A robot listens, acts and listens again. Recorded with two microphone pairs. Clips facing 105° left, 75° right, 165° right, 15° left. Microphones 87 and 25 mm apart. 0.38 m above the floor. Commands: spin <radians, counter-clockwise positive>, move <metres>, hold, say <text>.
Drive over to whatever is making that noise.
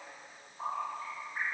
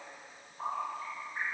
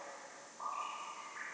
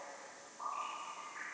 hold
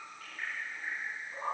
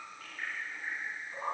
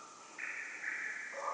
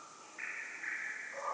hold
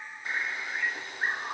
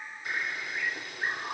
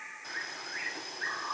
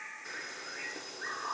spin 2.71
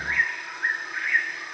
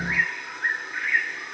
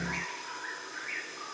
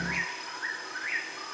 spin 0.35
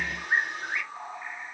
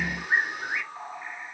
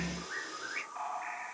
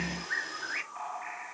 move 1.0
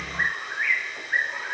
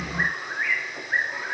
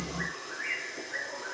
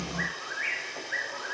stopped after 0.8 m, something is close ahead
say I am next to the bird.